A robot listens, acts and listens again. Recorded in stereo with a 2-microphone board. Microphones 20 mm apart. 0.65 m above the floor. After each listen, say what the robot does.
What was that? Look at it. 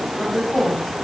Turn 90° left.
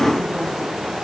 Keep listening.
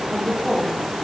Turn 10° left.
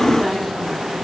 Keep listening.
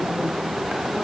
Keep listening.
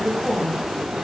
Turn 15° left.
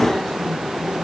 Keep listening.
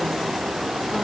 Keep listening.
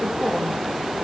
I heard a woman speaking from this way, but can't make it out now.